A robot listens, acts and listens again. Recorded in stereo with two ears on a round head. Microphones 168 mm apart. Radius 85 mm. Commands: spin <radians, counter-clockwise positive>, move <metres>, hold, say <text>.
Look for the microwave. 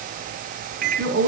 spin -0.79
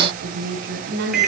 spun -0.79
say Found it: a microwave, straight ahead.